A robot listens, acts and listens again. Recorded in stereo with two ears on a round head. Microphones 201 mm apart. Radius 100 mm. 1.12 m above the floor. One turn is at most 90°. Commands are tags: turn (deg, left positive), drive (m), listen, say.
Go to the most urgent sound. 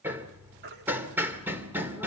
<turn deg="-50"/>
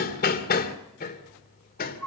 <drive m="1.0"/>
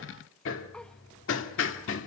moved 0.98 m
<listen/>
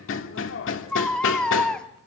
<drive m="1.0"/>
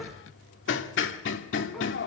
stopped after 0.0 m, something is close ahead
<listen/>
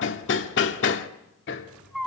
<say>Arrived at the baby crying, straight ahead.</say>